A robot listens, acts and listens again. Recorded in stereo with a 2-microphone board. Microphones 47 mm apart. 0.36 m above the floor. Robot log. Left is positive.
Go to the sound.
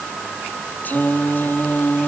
note: The singing: about 35° left or 145° left.
cmd yaw +35
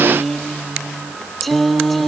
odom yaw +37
cmd fwd 1.0
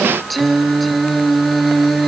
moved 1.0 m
cmd fwd 1.0
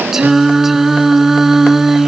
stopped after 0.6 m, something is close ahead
note: The singing is now 10° right.
cmd yaw -10
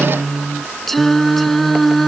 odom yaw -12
end: I am next to the singing.